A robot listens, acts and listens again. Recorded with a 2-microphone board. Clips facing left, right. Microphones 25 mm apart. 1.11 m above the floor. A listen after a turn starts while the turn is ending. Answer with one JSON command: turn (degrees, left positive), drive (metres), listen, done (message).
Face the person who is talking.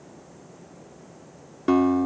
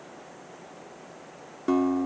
{"listen": true}
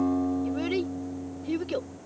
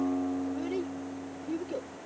{"turn": 90}
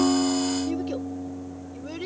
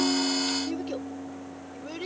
{"done": "Found it: a child speaking, straight ahead."}